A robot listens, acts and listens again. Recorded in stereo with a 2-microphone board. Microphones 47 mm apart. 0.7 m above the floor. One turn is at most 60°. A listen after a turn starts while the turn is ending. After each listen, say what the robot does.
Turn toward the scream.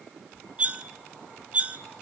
Keep listening.
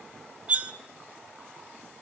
Keep listening.
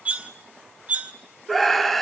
Turn 30° left.
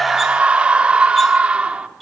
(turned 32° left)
Turn 25° right.
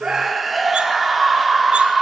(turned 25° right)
Found it: a scream, straight ahead, 2 to 4 m away.